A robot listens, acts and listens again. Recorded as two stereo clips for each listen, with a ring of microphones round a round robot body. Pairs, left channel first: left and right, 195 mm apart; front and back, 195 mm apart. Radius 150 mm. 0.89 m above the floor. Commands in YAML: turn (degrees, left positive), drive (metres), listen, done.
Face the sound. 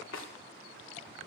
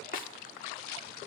turn: 45
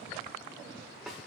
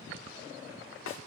done: "Facing the snare drum."